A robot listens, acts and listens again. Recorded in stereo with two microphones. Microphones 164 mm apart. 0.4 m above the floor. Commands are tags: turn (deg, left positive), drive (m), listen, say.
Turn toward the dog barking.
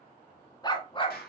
<turn deg="35"/>
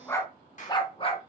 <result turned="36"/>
<turn deg="35"/>
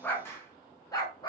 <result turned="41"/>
<turn deg="25"/>
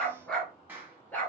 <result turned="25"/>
<turn deg="10"/>
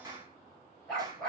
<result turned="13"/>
<say>Facing the dog barking, 2 to 4 m away.</say>